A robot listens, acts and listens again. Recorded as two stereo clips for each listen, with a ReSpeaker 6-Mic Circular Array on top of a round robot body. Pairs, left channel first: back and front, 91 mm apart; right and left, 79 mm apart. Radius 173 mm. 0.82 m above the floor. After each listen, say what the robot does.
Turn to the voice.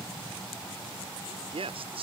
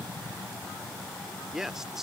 Found it: a man speaking, straight ahead.